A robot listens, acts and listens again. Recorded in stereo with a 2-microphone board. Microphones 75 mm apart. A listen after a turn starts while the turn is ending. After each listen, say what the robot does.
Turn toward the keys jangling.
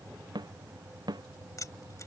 Turn 45° left.
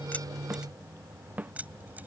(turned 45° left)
Turn 20° right.
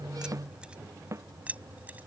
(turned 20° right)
Turn 20° right.
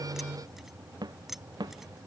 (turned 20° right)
Found it: keys jangling, straight ahead.